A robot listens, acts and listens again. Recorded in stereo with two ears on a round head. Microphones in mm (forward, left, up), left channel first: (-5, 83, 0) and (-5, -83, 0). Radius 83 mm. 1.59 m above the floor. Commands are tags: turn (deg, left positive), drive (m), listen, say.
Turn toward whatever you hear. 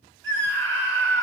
<turn deg="-70"/>
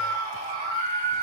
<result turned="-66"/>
<turn deg="-40"/>
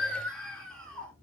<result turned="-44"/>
<say>Facing the scream.</say>